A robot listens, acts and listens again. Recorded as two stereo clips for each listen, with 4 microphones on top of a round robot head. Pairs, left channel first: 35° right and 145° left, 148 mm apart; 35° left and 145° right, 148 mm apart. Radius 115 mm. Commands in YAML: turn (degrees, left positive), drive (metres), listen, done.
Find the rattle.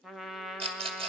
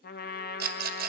turn: -160
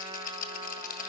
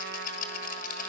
done: "Facing the rattle, 1 to 2 m away."